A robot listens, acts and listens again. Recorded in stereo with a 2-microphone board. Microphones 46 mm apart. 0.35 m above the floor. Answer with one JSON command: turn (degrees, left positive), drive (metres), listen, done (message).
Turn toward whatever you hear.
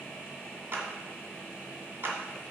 {"turn": -55}
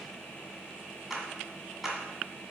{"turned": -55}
{"turn": -10}
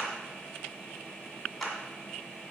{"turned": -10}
{"done": "Facing the clap, 1 to 2 m away."}